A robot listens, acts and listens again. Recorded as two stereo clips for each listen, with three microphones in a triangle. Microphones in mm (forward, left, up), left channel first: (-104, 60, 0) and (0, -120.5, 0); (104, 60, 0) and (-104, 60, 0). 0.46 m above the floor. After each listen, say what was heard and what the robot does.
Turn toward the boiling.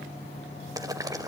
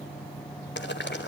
The boiling: 10° left. Turn 10° left.
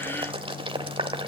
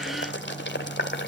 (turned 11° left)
Facing the boiling, 1 to 2 m away.